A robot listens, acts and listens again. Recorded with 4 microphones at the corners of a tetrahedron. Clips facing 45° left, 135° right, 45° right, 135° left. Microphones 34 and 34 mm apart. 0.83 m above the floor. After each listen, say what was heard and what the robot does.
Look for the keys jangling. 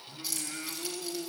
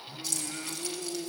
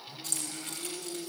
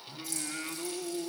The keys jangling: 35° right. Turn 35° right.
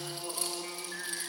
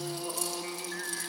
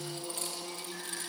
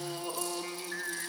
Keep listening.
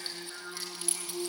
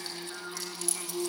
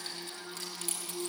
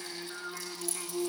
The keys jangling is now 15° right. Turn 15° right.
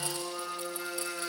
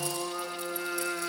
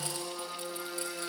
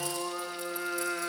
Keep listening.
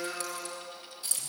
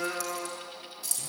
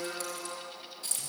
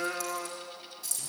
Found it: keys jangling, straight ahead.